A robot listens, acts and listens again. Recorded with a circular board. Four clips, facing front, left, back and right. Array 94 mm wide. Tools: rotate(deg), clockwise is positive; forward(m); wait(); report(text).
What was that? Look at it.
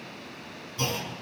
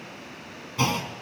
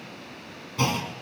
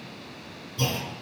rotate(-120)
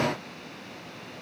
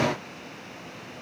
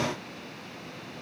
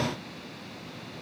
report("Facing where the clunk came from. I can't hear it now.")